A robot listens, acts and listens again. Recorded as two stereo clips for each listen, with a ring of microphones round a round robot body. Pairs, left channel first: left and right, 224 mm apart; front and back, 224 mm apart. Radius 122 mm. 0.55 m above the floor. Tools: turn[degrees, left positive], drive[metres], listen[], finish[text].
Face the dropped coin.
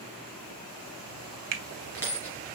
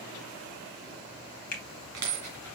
Thought: The dropped coin: 170° left.
Action: turn[170]
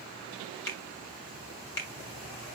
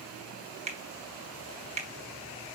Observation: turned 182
Thought: Nothing new. It was at 10° right.
Action: turn[-10]
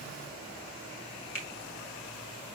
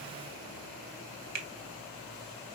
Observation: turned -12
Action: finish[I heard a dropped coin from this way, but can't make it out now.]